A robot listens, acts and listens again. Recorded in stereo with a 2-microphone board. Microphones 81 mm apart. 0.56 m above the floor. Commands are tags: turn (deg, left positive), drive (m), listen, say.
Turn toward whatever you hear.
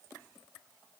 <listen/>
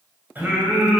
<turn deg="-15"/>
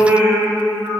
<turn deg="-20"/>
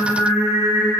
<turn deg="-30"/>
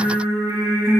<turn deg="-140"/>
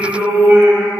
<turn deg="-20"/>
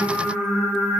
<say>Facing the singing, 2 to 4 m away.</say>